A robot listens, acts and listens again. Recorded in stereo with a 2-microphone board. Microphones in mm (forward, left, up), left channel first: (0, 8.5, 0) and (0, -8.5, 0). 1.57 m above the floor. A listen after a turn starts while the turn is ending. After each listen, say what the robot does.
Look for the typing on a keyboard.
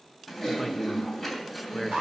Turn 30° left.
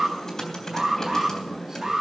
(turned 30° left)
Turn 150° left.
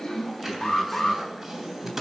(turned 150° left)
Turn 15° right.
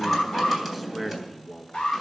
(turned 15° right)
Facing the typing on a keyboard.